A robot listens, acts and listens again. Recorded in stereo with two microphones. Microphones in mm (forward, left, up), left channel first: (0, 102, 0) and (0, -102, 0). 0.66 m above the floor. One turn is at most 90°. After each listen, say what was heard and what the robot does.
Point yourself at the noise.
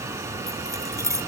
Turn 30° right.
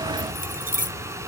So it is at 135° right. Turn 90° right.
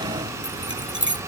The keys jangling is now 65° right. Turn 65° right.
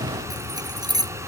The keys jangling is now 20° right. Turn 20° right.
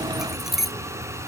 Found it: keys jangling, straight ahead.